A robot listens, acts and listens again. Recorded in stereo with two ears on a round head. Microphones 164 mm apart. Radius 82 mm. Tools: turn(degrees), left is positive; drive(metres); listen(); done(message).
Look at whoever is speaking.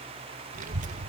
turn(degrees=-45)
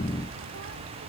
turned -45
turn(degrees=-90)
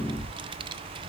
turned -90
turn(degrees=-25)
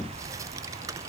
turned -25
turn(degrees=-15)
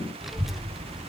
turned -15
done("Facing the child speaking, under 1 m away.")